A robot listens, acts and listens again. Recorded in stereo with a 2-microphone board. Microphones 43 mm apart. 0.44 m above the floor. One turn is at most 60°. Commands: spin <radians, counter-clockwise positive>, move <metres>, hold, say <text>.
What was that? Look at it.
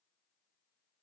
hold
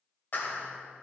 spin 0.87
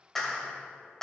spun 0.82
spin 0.17
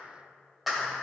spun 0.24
say Found it: a clap, straight ahead, 1 to 2 m away.